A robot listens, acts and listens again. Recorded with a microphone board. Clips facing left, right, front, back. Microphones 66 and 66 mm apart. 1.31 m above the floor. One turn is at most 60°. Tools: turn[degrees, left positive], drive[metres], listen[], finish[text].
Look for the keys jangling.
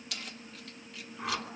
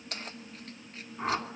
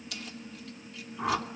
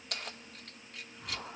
Thought: The keys jangling: 140° right.
Action: turn[-60]
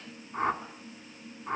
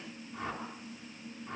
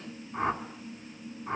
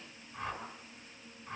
Thought: Nothing new. It was at 80° right.
Action: turn[-60]
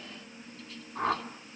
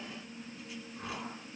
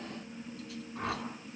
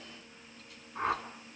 Thought: Nothing new. It was at 20° right.
Action: turn[-20]
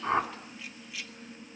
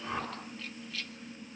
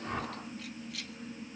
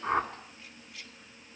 Thought: The keys jangling is now 15° left.
Action: turn[15]
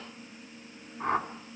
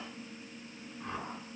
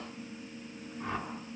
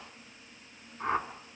Action: listen[]
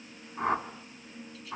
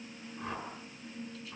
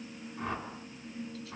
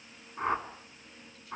Action: listen[]
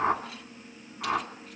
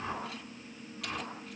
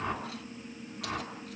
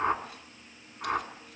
Action: finish[I heard keys jangling from this way, but can't make it out now.]